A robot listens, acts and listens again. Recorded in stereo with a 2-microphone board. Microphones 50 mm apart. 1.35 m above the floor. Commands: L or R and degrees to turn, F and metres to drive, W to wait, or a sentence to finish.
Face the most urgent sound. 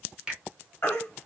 L40
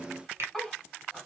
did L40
W
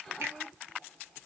W
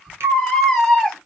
Facing the baby crying, 1 to 2 m away.